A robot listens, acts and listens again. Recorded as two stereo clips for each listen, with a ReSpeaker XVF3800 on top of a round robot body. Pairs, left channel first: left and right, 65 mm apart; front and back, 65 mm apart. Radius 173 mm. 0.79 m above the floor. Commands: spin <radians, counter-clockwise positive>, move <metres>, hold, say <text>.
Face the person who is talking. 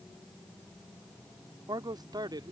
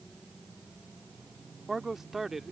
spin -1.66
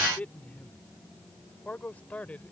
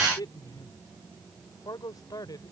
spin 0.35
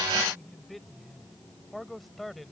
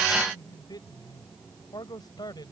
say Facing the man speaking.